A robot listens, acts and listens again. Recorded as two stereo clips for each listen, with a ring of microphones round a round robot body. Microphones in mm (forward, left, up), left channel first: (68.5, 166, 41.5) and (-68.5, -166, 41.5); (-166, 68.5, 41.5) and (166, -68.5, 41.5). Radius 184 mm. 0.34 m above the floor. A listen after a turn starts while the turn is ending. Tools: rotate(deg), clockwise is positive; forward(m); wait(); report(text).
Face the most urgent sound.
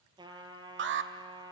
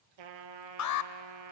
rotate(165)
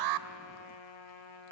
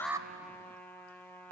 rotate(60)
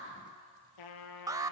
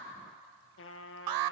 rotate(35)
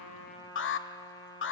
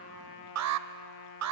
rotate(-15)
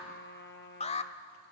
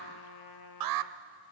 report("Found it: an alarm, straight ahead, 1 to 2 m away.")